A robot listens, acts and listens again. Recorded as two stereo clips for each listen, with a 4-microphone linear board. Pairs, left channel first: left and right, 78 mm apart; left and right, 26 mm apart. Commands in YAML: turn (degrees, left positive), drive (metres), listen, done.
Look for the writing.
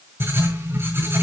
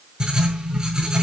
turn: -30
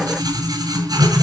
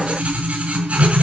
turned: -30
turn: -115
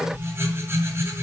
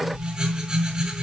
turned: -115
turn: -35
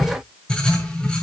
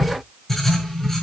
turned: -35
turn: 15
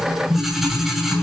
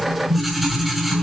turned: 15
done: "Facing the writing, over 4 m away."